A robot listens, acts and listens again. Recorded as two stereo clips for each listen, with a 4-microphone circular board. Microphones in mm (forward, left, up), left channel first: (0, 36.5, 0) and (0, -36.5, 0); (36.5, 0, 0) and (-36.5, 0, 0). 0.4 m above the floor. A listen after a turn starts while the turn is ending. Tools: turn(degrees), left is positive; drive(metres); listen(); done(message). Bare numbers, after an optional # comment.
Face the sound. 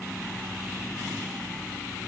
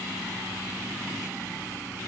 listen()
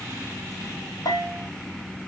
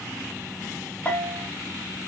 # The bell: 65° left.
turn(65)
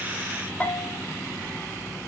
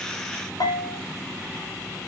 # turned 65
# The bell is now 15° left.
turn(15)
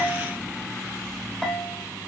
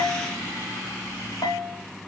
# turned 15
done("Facing the bell.")